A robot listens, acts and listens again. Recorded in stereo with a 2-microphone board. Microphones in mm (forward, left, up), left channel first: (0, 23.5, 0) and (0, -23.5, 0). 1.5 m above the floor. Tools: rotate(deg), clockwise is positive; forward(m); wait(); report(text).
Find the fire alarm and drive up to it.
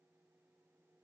wait()
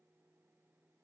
wait()
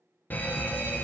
rotate(-35)
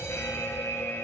rotate(-110)
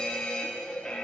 rotate(-15)
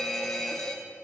forward(1.0)
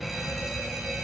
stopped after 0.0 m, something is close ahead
report("Blocked. The fire alarm is further on, straight ahead.")